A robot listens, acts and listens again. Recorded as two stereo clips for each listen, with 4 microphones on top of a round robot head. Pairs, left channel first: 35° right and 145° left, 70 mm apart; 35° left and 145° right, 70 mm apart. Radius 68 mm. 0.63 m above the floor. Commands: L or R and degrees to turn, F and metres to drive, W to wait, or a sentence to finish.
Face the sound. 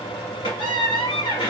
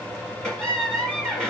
R45
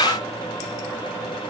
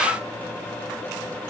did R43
W
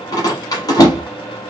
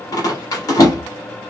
Facing the squeak, 1 to 2 m away.